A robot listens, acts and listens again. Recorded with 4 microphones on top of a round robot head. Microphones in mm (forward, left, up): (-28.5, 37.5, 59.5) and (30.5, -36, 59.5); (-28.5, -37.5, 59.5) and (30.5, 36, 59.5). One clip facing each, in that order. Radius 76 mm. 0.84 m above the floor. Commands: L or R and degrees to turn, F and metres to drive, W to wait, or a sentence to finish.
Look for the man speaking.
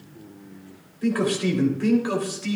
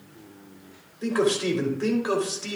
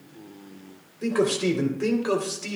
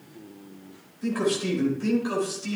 R115
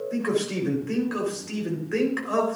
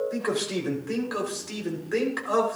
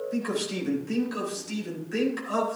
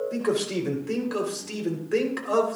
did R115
L25
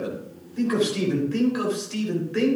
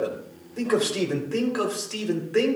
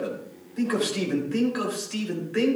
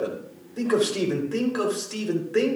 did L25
Found it: a man speaking, straight ahead, 2 to 4 m away.